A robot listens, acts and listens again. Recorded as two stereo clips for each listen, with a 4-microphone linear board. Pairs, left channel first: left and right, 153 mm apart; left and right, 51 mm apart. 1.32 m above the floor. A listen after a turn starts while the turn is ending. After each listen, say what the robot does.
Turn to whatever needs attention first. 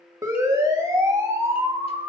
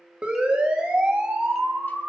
Turn 20° right.
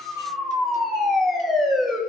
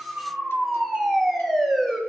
Found it: a siren, straight ahead.